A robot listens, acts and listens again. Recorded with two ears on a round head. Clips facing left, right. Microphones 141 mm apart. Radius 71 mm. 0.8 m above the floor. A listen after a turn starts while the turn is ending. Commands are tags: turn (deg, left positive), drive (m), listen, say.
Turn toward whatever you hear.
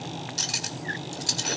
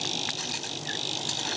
<turn deg="45"/>
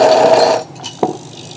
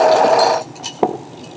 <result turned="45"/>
<say>Found it: cutlery clinking, straight ahead, 1 to 2 m away.</say>